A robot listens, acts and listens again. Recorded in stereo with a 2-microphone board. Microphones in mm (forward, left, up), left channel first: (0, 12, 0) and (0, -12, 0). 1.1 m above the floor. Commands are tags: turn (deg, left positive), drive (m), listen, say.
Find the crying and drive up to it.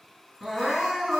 <turn deg="30"/>
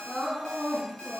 <turn deg="-30"/>
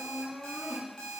<turn deg="-10"/>
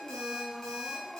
<drive m="1.0"/>
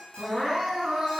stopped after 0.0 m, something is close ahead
<say>Blocked. The crying is further on, straight ahead.</say>